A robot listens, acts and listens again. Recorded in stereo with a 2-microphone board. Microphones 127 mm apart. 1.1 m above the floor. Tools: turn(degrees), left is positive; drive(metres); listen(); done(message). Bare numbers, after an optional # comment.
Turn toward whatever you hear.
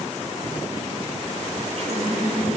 # The running tap: about 55° right or 125° right.
turn(-55)
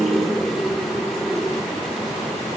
done("Facing the running tap.")